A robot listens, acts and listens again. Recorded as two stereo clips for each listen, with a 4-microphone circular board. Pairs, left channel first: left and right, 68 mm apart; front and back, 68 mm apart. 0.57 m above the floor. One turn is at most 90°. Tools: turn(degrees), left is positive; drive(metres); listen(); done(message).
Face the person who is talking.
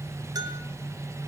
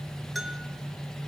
listen()
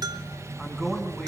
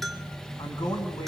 done("Found it: a man speaking, straight ahead.")